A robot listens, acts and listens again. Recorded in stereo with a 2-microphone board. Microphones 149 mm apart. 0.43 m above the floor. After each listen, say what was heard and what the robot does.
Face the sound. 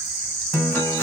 Turn 30° left.
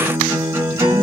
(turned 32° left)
So it is at 20° right. Turn 20° right.
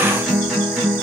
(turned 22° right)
Facing the guitar, 1 to 2 m away.